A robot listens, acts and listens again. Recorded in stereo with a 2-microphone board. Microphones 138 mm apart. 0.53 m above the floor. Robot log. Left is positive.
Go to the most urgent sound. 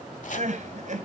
note: The crying: about 60° right or 120° right.
cmd yaw -60
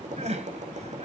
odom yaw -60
note: So it is at 55° right.
cmd yaw -55
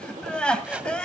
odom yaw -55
cmd fwd 1.0
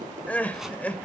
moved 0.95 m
note: The crying is now 10° left.
cmd yaw +10
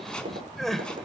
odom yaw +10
cmd fwd 1.0
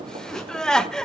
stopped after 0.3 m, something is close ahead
end: Arrived at the crying, straight ahead.